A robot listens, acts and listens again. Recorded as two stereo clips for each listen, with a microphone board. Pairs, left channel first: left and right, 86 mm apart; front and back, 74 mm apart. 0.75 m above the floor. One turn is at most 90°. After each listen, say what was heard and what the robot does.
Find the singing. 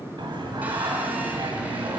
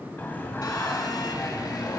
The singing: 60° right. Turn 60° right.
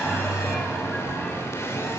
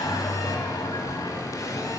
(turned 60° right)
Found it: singing, straight ahead.